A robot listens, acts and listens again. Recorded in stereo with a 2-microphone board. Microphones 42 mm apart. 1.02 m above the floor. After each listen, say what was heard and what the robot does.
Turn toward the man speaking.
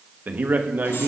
The man speaking: about 45° right or 135° right. Turn 45° right.
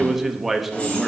Found it: a man speaking, straight ahead, 1 to 2 m away.